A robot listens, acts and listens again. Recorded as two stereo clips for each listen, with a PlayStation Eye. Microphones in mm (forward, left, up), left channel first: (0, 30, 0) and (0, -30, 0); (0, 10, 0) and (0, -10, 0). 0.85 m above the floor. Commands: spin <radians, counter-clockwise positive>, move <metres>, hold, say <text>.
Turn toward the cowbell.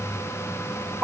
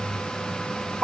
hold
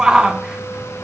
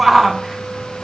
hold
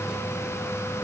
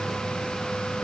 say I can't make out a cowbell, only a shout.